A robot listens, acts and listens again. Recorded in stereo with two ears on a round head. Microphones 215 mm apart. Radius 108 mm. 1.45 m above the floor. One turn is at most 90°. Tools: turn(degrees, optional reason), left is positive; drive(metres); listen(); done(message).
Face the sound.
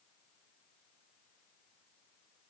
listen()
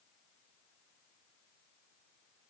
listen()
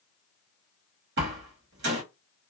turn(degrees=-50, reason="The door slam: about 50° right or 130° right.")
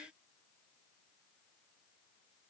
listen()
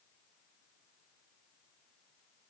done("I heard a door slam, but can't make it out now. It was about straight ahead or 80° right.")